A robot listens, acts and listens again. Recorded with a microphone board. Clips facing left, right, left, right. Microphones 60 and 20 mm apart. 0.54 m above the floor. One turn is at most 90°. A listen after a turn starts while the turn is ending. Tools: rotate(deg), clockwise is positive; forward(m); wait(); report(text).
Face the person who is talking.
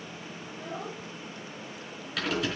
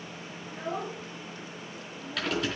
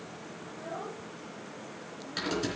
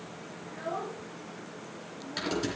rotate(60)
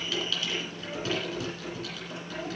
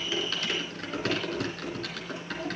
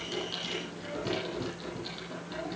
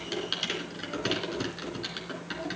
wait()
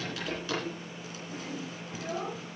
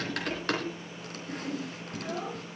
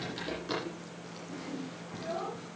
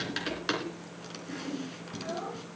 report("Found it: a child speaking, straight ahead.")